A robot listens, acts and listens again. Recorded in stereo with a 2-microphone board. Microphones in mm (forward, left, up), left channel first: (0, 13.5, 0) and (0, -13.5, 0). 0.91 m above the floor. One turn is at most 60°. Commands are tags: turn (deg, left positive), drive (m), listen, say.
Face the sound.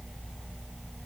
<listen/>
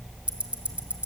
<turn deg="-50"/>
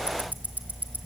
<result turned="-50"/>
<turn deg="-60"/>
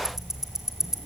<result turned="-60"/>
<turn deg="-15"/>
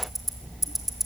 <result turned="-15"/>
<say>Facing the ticking.</say>